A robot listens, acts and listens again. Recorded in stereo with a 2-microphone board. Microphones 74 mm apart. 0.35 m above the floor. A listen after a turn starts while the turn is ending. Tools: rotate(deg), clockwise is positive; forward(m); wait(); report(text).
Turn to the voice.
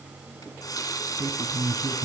rotate(45)
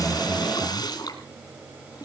wait()
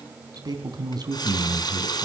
rotate(85)
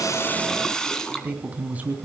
rotate(20)
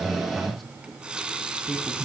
report("Found it: a man speaking, straight ahead, 2 to 4 m away.")